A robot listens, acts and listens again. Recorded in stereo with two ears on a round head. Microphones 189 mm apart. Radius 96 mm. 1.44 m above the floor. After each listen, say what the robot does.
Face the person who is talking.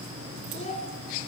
Turn 30° left.
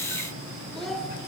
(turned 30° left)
Facing the child speaking.